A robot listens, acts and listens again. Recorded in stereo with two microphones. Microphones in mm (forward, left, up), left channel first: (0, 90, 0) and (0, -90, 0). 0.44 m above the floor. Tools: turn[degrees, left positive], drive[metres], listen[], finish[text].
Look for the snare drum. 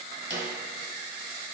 Thought: The snare drum: about 75° right or 105° right.
Action: turn[-75]
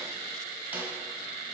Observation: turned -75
Thought: So it is at 10° right.
Action: turn[-10]
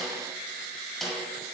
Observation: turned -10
Action: finish[Facing the snare drum, 1 to 2 m away.]